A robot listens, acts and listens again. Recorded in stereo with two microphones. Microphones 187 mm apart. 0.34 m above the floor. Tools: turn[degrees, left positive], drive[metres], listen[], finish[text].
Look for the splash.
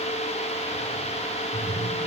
Action: turn[-30]
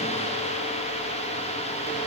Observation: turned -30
Action: listen[]
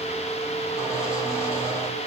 Action: finish[I heard a splash, but can't make it out now. It was about 20° left or 140° right.]